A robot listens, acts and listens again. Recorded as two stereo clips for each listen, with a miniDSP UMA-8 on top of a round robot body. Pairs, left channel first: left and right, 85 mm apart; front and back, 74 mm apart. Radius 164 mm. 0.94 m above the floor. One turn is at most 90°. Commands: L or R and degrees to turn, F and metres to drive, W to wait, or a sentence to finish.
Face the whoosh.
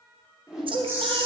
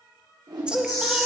R90
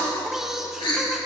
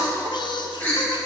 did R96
R75
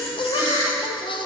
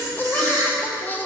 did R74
W
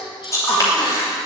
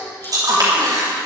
Facing where the whoosh came from. I can't hear it now.